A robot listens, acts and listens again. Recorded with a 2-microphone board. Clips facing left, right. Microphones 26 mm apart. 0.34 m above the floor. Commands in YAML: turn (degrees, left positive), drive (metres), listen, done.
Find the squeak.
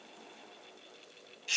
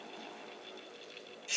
listen: true
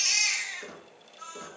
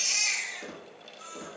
turn: -30
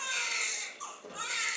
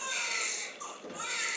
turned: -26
turn: -145
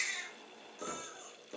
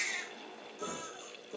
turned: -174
turn: 25
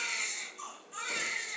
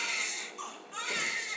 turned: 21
listen: true
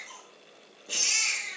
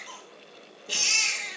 listen: true
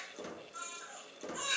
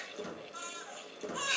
turn: 10
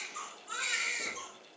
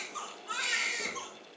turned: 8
listen: true
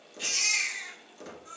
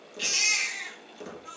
done: "Facing the squeak, 1 to 2 m away."